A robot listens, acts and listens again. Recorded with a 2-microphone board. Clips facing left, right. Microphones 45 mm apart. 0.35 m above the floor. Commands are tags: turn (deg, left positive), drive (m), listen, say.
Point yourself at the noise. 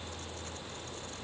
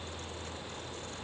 <listen/>
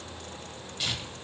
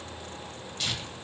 <turn deg="30"/>
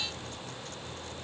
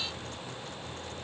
<listen/>
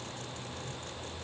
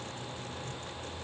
<listen/>
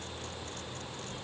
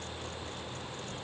<say>I heard tearing paper, but can't make it out now. It was about 20° right or 140° left.</say>